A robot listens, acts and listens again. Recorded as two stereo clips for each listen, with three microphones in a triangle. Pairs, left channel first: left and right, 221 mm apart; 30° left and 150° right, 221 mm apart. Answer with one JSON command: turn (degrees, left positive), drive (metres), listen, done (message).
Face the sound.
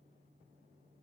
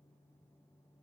{"listen": true}
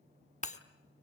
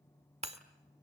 {"turn": 150}
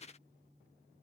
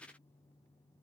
{"done": "I heard breaking glass from this way, but can't make it out now."}